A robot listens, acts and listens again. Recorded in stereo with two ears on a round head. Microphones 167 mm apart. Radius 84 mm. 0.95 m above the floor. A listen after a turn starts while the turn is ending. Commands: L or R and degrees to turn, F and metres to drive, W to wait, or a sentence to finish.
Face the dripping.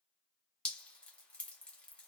L30
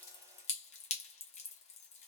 L145
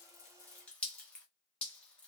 Facing the dripping, under 1 m away.